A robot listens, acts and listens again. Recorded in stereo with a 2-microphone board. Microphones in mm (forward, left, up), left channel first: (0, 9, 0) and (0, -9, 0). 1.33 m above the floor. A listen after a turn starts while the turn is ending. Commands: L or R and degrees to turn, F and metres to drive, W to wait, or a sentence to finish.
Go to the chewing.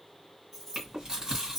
R45
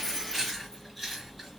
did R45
F1.0
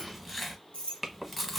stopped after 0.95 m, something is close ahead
Arrived at the chewing, straight ahead.